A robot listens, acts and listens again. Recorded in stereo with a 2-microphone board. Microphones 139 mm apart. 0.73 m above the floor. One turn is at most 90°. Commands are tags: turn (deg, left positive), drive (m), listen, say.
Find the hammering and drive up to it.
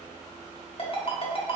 <listen/>
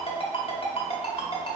<listen/>
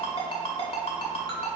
<say>I can't make out hammering, only a ringtone.</say>